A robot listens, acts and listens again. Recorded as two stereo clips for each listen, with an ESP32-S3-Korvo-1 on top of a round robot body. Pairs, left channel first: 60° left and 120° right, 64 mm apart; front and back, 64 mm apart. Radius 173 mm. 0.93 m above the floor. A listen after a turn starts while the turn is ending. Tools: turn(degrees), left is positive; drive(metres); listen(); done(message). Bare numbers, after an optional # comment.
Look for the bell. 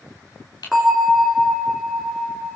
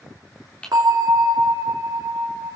# The bell: 155° left.
turn(155)
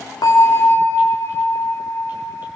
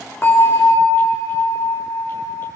# The bell is now 25° left.
turn(25)
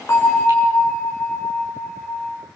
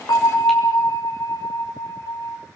done("Facing the bell.")